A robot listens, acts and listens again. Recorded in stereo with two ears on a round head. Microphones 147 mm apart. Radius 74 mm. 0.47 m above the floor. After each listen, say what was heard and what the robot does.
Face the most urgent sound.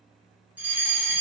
Turn 30° right.
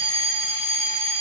So it is at 20° left. Turn 20° left.
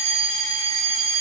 Found it: a fire alarm, straight ahead.